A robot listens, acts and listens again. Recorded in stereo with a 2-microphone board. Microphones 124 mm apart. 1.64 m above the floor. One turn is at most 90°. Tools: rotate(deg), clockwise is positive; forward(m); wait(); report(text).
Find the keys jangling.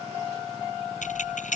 rotate(-90)
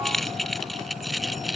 report("Found it: keys jangling, straight ahead.")